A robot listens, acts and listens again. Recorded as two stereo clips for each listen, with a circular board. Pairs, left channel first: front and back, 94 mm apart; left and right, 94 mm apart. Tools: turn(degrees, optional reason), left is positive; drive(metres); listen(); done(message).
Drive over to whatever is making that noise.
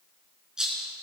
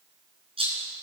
turn(degrees=-100, reason="The rattle: 100° right.")
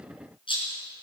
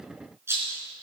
turn(degrees=-25, reason="The rattle is now 25° right.")
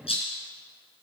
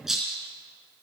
drive(metres=1.0)
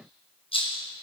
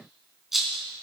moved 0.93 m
drive(metres=1.0)
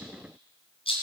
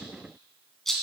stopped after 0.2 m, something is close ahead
done("Something is in my way. I am facing the rattle but have not reached it.")